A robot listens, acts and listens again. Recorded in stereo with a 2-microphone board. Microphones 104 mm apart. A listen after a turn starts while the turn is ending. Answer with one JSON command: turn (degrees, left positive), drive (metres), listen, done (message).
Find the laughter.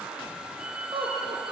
{"turn": -65}
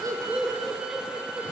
{"done": "Found it: laughter, straight ahead, over 4 m away."}